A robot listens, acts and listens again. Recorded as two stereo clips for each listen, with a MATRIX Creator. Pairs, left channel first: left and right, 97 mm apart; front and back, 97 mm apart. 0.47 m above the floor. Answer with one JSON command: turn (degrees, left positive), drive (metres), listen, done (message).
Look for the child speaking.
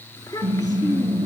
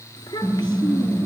{"turn": 40}
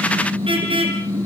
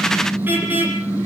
{"listen": true}
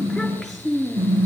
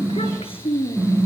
{"done": "Facing the child speaking."}